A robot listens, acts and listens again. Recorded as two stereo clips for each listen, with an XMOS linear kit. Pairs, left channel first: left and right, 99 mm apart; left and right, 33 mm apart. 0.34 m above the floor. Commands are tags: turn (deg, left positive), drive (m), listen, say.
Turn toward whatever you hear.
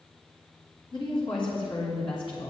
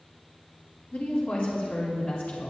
<turn deg="60"/>
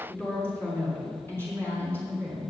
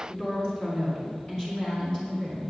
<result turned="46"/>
<turn deg="20"/>
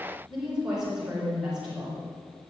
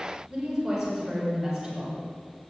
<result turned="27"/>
<say>Found it: a woman speaking, straight ahead, over 4 m away.</say>